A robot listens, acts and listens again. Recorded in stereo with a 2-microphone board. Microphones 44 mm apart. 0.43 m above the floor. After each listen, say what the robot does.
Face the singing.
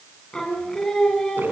Turn 30° left.
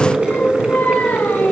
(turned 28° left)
Turn 135° left.
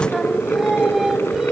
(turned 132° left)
Turn 10° right.
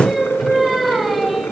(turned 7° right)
Facing the singing, 2 to 4 m away.